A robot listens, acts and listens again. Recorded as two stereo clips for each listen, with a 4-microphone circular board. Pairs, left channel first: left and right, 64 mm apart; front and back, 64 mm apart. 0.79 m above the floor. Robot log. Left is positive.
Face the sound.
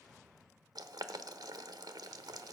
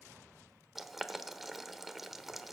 note: The boiling: 90° right.
cmd yaw -90
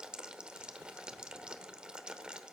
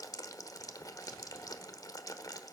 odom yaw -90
note: The boiling is now 15° right.
cmd yaw -15
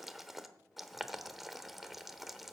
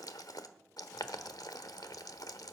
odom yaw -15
end: Facing the boiling.